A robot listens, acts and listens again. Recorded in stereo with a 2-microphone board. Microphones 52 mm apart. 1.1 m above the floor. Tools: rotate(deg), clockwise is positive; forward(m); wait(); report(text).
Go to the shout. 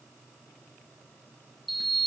wait()
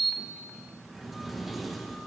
wait()
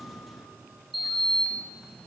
report("I can't make out a shout to turn to.")